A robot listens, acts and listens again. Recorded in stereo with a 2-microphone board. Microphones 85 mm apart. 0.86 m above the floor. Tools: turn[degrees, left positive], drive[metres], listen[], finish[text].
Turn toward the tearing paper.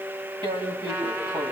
Thought: The tearing paper: about 75° right or 105° right.
Action: turn[-75]
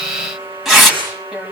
Action: finish[Facing the tearing paper, over 4 m away.]